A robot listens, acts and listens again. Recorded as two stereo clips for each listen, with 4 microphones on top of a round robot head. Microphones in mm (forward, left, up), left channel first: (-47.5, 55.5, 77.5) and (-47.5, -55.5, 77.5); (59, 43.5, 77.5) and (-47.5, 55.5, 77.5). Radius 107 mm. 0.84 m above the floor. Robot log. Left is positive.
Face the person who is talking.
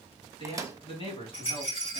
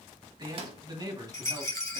note: The man speaking: 125° left.
cmd yaw +125
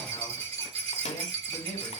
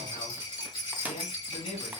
note: The man speaking is now 15° left.
cmd yaw +15
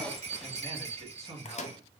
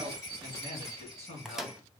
end: Found it: a man speaking, straight ahead, 2 to 4 m away.